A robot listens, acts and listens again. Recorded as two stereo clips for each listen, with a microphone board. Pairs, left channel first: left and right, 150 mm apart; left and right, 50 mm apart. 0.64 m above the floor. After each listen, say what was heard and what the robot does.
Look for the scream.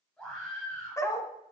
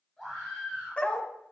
Turn 30° left.
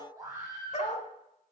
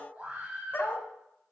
So it is at 25° right. Turn 25° right.
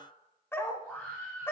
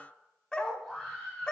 The scream is now 10° left. Turn 10° left.
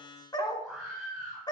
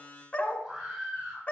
Facing the scream, over 4 m away.